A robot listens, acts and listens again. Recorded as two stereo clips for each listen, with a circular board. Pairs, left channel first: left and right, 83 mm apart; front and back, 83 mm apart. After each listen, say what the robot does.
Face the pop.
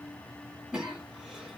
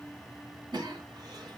Keep listening.
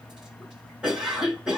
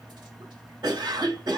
Keep listening.
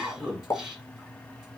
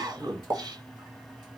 Turn 145° left.
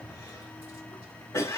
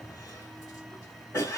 Facing where the pop came from. I can't hear it now.